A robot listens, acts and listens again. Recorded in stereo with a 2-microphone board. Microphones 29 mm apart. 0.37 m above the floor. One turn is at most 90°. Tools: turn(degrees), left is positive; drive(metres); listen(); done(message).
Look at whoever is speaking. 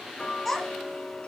turn(degrees=30)
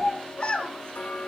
turn(degrees=90)
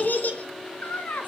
turn(degrees=75)
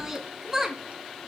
turn(degrees=-15)
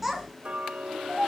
done("Facing the child speaking.")